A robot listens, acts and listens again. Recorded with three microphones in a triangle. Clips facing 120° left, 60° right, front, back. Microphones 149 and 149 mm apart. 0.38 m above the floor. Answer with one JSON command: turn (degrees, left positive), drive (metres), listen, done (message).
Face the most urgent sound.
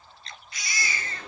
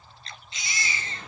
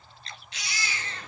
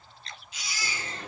{"done": "Facing the baby crying."}